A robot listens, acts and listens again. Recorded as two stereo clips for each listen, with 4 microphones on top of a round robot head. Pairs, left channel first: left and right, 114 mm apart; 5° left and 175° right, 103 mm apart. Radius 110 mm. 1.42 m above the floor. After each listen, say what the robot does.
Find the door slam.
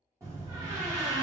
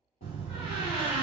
Turn 20° right.
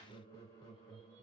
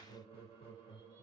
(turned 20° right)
I heard a door slam from this way, but can't make it out now.